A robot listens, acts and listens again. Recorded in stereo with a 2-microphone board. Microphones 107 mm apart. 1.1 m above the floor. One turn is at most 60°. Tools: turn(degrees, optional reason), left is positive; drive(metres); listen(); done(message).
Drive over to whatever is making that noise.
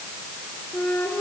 turn(degrees=25, reason="The flute: about 25° left or 155° left.")
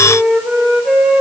drive(metres=1.0)
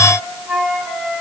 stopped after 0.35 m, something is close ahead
done("Blocked. The flute is further on, straight ahead.")